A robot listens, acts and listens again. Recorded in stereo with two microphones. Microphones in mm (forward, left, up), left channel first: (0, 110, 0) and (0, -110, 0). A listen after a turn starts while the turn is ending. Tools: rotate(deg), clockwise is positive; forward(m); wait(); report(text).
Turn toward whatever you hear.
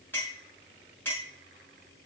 rotate(-30)
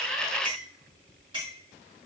rotate(20)
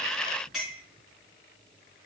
report("Found it: a clink, straight ahead, over 4 m away.")